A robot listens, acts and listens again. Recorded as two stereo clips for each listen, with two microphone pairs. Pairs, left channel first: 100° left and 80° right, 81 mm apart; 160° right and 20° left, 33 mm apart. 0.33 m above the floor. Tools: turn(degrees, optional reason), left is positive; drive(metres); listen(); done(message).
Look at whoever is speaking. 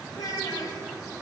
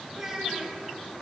turn(degrees=90, reason="The child speaking: 90° left.")
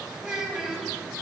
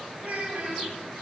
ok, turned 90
done("Facing the child speaking.")